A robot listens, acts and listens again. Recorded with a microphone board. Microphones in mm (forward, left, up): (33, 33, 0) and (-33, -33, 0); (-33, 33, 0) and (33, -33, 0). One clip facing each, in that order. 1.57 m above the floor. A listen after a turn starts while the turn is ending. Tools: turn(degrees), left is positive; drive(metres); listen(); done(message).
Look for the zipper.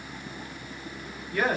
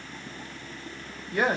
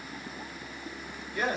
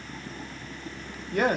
listen()
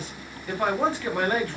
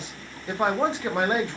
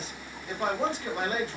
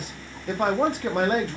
listen()
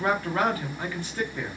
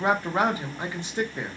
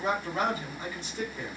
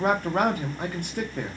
done("I can't make out a zipper, only a man speaking.")